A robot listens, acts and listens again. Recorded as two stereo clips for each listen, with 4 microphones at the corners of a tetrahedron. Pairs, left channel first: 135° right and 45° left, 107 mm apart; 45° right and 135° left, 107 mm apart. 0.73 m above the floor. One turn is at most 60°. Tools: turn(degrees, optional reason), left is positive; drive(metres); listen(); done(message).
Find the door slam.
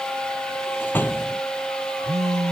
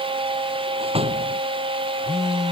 turn(degrees=60, reason="The door slam: 155° left.")
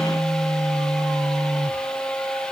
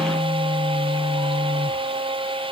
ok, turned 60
turn(degrees=60, reason="Nothing new. It was at 95° left.")
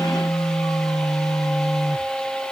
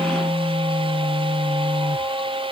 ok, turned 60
turn(degrees=35, reason="Nothing new. It was at 35° left.")
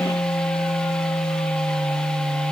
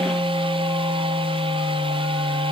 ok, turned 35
done("Facing where the door slam came from. I can't hear it now.")